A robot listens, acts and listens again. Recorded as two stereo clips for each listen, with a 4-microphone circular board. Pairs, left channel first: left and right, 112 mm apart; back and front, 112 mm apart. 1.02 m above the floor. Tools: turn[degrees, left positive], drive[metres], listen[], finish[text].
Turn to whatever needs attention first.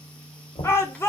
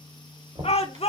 Thought: The shout: 155° left.
Action: turn[155]
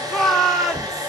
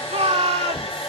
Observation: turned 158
Action: finish[Facing the shout.]